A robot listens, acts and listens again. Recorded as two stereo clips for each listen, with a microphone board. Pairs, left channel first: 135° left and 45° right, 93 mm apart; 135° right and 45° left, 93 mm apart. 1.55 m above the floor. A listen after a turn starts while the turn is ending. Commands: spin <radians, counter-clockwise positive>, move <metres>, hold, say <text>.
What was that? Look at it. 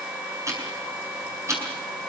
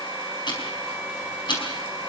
spin -1.75
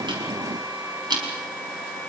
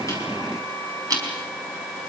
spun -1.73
say Found it: ticking, straight ahead, over 4 m away.